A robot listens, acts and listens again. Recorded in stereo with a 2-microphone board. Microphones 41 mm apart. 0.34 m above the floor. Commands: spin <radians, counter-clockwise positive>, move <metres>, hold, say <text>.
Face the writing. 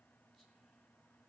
hold
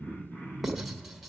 spin -0.52
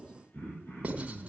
spin -2.62
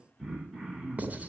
spin -0.70
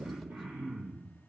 hold
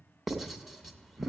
say Facing the writing, 2 to 4 m away.